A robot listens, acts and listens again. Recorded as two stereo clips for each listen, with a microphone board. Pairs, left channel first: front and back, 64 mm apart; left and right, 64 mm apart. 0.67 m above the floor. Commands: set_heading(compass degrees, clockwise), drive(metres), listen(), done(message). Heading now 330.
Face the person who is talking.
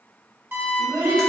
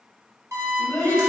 set_heading(150)
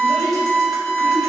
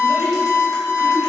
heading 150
listen()
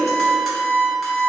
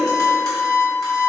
listen()
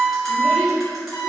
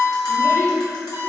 done("I heard a child speaking from this way, but can't make it out now.")